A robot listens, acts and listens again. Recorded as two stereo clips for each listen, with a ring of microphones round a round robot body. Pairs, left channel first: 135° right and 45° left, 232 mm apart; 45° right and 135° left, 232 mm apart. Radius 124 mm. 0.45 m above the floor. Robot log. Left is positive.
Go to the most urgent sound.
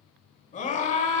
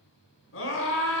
note: The scream: 75° right.
cmd yaw -75
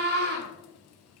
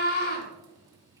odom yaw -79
cmd fwd 1.0
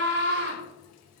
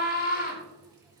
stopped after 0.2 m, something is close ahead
end: Blocked. The scream is further on, straight ahead.